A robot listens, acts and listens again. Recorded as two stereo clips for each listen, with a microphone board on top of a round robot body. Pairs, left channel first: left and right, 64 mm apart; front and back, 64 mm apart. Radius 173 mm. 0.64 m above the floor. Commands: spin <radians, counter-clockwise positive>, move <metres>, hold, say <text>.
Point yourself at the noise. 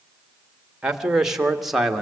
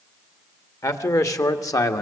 say Found it: a man speaking, straight ahead, 2 to 4 m away.